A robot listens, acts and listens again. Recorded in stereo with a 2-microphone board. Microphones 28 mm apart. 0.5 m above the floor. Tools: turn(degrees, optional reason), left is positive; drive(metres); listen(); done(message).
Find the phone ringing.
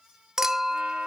listen()
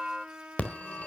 turn(degrees=50, reason="The phone ringing: about 50° left or 130° left.")
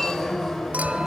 turn(degrees=10, reason="So it is at 10° left.")
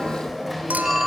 done("Facing the phone ringing, 1 to 2 m away.")